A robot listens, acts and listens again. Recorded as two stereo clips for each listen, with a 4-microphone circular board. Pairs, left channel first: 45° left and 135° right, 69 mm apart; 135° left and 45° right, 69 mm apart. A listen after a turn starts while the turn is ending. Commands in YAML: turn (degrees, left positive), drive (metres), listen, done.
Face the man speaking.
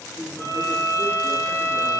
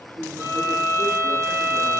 turn: -35
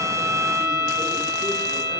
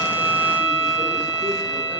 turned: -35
listen: true
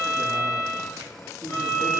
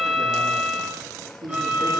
turn: -85
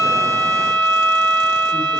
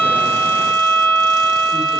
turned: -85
listen: true
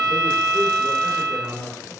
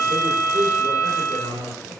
turn: -25
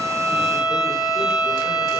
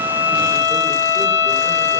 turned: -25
listen: true
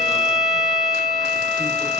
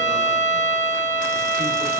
listen: true
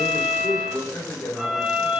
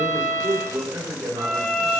done: "Facing the man speaking."